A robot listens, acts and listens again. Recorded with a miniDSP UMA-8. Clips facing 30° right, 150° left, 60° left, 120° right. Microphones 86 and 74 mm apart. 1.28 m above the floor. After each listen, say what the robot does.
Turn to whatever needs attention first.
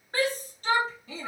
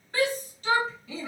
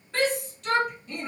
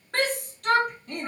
Turn 80° right.
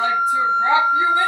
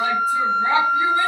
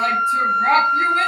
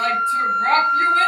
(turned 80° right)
Turn 15° right.
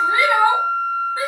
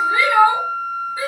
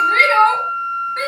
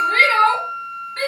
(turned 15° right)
Found it: a shout, straight ahead, 1 to 2 m away.